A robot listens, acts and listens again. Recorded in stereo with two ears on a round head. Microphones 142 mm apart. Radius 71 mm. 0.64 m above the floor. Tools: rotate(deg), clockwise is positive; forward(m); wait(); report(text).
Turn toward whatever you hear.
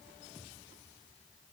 wait()
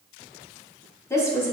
rotate(-20)
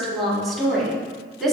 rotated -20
rotate(-30)
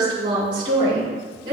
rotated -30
rotate(30)
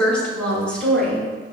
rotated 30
report("Facing the woman speaking, over 4 m away.")